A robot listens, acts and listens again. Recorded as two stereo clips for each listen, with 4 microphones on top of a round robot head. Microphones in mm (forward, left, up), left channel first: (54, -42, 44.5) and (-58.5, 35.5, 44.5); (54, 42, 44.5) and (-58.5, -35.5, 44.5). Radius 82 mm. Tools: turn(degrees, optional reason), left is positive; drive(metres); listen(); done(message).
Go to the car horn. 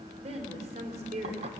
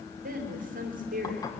listen()
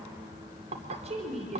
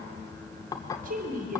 listen()
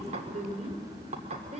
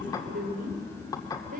done("I can't make out a car horn to turn to.")